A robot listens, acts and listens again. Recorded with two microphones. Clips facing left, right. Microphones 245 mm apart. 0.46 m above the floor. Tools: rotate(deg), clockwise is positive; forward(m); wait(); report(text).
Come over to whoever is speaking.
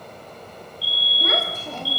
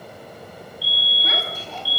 rotate(-55)
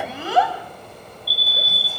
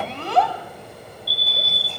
forward(1.0)
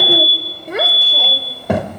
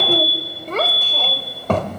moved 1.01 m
rotate(-15)
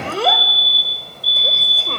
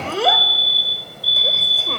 forward(1.0)
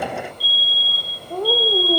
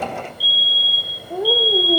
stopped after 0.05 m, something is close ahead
report("I am next to the child speaking.")